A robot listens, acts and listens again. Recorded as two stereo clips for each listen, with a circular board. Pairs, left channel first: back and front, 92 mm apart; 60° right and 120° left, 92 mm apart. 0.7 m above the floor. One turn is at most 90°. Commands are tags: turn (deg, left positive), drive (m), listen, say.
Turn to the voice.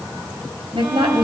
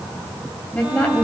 <turn deg="15"/>
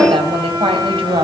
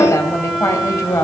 <say>Found it: a woman speaking, straight ahead, 2 to 4 m away.</say>